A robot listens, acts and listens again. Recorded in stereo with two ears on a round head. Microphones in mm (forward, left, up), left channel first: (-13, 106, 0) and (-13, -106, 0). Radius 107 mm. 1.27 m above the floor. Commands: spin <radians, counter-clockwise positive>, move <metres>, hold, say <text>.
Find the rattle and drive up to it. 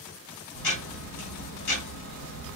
hold
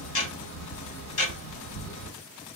hold
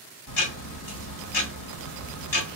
say I can't make out a rattle to turn to.